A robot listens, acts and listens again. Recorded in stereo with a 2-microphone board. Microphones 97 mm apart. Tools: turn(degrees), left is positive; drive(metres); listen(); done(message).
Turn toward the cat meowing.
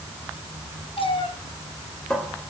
turn(degrees=65)
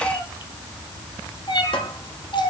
turn(degrees=50)
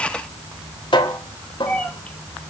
turn(degrees=10)
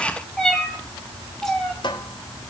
done("Found it: a cat meowing, straight ahead.")